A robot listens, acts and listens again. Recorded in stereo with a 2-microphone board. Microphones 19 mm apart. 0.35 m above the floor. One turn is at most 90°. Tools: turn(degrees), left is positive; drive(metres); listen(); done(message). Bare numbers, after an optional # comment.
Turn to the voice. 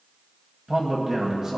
# The man speaking: about 40° right or 140° right.
turn(-40)
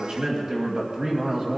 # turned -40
# So it is at 95° right.
turn(-90)
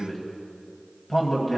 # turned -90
done("Facing the man speaking.")